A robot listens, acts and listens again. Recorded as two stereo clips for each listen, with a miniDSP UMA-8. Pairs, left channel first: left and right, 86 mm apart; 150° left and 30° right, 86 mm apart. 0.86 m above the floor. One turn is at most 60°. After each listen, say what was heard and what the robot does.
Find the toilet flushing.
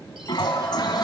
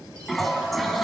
The toilet flushing: 60° left. Turn 60° left.
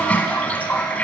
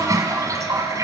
The toilet flushing is now 15° left. Turn 15° left.
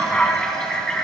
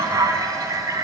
The toilet flushing is now 10° left. Turn 10° left.
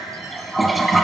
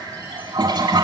Found it: a toilet flushing, straight ahead.